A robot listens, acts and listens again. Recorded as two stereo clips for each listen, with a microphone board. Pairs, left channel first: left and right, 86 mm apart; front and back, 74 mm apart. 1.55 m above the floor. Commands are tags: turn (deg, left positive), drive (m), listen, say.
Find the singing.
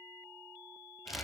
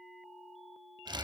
<listen/>
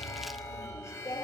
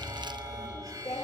<turn deg="35"/>
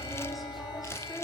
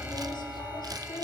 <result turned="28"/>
<say>Facing the singing, 2 to 4 m away.</say>